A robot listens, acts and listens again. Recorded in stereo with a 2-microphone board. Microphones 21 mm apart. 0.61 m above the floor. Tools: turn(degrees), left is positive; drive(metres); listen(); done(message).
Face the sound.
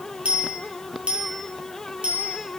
turn(degrees=-65)
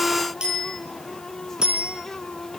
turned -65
turn(degrees=-50)
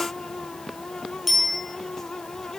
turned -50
done("Found it: a bicycle bell, straight ahead.")